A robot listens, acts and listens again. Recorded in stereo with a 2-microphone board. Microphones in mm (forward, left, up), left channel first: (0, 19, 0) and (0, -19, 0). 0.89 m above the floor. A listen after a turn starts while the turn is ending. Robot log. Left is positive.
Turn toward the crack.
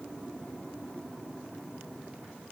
cmd idle
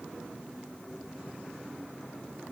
cmd idle
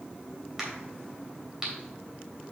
cmd yaw -30
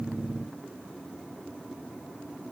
cmd idle
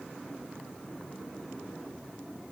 end: I heard a crack, but can't make it out now. It was about 15° left or 135° right.